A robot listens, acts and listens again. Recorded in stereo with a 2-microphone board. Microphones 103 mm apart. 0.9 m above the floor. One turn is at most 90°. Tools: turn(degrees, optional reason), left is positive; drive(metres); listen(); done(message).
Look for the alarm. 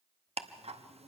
listen()
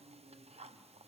listen()
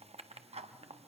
done("I can't make out an alarm, only ticking.")